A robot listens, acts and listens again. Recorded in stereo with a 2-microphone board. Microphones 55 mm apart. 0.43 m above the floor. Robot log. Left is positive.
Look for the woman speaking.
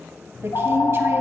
note: The woman speaking: about 50° right or 130° right.
cmd yaw -50
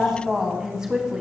note: So it is at 15° right.
cmd yaw -15
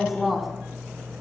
end: Facing the woman speaking, 2 to 4 m away.